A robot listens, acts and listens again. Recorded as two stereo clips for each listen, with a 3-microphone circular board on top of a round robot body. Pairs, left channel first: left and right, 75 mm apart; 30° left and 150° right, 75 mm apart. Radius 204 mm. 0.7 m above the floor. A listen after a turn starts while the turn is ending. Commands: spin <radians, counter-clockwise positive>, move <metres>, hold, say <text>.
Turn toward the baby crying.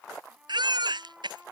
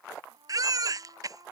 spin -1.92
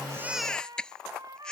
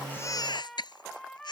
spin 0.17
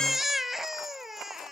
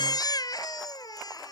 say Found it: a baby crying, straight ahead.